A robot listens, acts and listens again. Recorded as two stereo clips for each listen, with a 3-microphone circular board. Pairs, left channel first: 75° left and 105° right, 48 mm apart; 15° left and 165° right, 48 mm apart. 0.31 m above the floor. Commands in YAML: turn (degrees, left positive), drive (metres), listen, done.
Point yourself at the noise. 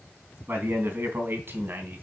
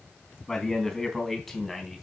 turn: -75
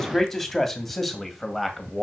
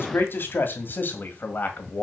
turn: -20
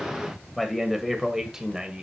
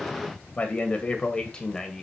turn: -50
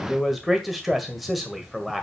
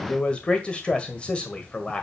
turn: -15
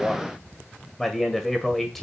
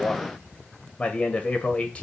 done: "Facing the man speaking, 1 to 2 m away."